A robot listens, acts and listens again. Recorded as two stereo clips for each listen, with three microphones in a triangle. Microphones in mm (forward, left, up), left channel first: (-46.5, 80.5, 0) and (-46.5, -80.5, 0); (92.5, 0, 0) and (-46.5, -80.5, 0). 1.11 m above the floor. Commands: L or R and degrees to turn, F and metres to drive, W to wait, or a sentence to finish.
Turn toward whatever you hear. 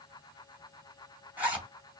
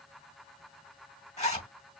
R10
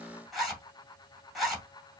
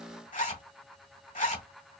Facing the zipper.